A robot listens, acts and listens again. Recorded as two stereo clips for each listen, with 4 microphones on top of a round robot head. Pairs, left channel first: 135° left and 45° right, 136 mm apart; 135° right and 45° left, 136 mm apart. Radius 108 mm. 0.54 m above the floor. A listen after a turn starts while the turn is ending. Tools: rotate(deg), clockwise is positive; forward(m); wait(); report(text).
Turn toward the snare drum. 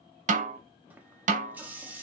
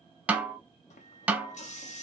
rotate(35)
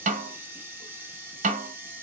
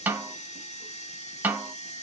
rotate(35)
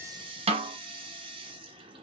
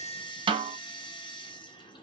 report("Facing the snare drum, under 1 m away.")